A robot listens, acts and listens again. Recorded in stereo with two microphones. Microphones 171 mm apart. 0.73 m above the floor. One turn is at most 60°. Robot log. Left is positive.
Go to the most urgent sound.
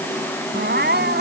cmd yaw -60
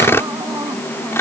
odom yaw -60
note: Nothing new. It was at 30° right.
cmd yaw -30
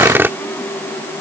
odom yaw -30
cmd idle
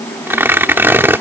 end: I heard crying from this way, but can't make it out now. I did not reach it.